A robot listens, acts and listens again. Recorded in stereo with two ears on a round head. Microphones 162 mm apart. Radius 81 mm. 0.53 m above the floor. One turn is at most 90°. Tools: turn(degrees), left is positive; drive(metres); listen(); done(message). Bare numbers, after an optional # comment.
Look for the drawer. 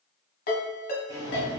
# The drawer: about 20° right or 160° right.
turn(-20)
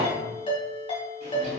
# So it is at 140° right.
turn(-90)
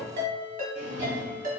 # The drawer is now 60° right.
turn(-60)
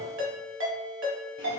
listen()
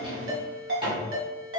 # The drawer is now 30° right.
turn(-30)
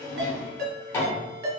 # The drawer is now 15° left.
turn(15)
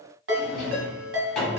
done("Found it: a drawer, straight ahead, 1 to 2 m away.")